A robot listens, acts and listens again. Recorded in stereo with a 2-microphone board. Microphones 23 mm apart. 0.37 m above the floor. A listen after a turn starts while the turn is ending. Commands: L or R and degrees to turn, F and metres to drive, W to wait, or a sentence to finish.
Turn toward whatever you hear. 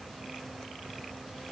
W
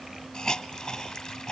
L25
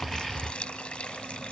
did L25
L130
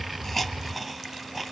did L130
Found it: a hiss, straight ahead.